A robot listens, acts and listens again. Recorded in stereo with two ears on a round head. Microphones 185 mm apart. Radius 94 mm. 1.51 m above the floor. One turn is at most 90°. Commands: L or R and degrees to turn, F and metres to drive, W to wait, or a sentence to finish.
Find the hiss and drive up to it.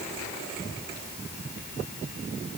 W
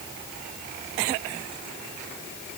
W
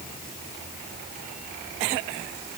I can't make out a hiss.